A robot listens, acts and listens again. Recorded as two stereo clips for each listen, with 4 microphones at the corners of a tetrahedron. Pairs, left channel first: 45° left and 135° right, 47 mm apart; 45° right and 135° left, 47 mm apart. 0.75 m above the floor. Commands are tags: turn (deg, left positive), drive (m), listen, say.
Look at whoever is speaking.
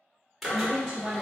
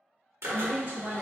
<turn deg="175"/>
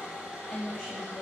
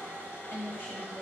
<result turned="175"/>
<turn deg="-25"/>
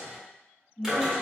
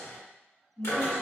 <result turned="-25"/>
<turn deg="-15"/>
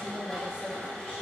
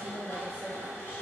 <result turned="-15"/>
<say>Found it: a woman speaking, straight ahead, 1 to 2 m away.</say>